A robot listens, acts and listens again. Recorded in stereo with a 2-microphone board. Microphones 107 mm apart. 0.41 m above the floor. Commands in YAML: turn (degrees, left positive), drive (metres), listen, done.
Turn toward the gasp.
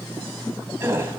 turn: -25
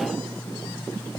listen: true
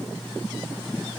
done: "I heard a gasp, but can't make it out now. It was about straight ahead or 130° right."